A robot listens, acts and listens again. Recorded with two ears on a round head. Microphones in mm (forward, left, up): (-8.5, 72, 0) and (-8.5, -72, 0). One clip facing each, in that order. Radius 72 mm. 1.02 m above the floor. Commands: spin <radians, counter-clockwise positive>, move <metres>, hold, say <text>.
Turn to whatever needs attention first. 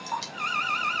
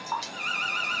spin -0.44
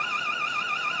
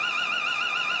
spin -2.36
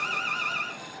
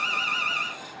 spin -0.70
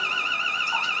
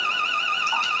spin -0.17
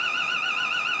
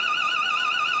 say Facing the alarm.